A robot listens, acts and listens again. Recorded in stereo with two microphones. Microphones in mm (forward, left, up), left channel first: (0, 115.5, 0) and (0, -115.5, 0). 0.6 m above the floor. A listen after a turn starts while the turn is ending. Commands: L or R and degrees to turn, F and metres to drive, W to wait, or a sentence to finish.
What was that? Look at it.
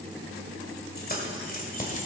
L35
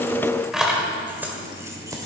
R15
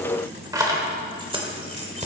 R30
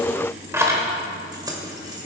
R15
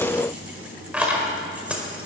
Found it: keys jangling, straight ahead.